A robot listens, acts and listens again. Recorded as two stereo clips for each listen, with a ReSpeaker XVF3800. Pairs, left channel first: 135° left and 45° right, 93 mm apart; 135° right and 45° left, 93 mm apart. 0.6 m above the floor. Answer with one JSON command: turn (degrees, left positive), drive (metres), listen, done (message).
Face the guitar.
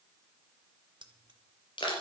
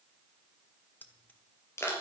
{"listen": true}
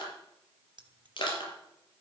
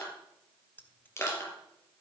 {"listen": true}
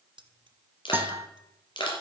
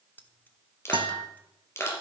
{"turn": 20}
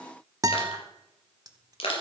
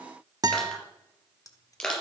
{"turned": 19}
{"done": "Found it: a guitar, straight ahead."}